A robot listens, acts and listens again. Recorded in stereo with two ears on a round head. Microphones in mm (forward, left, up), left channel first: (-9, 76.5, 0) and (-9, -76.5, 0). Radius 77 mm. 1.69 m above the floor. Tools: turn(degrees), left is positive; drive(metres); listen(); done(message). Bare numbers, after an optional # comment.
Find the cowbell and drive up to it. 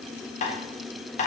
listen()
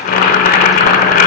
listen()
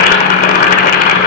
done("I can't make out a cowbell to turn to.")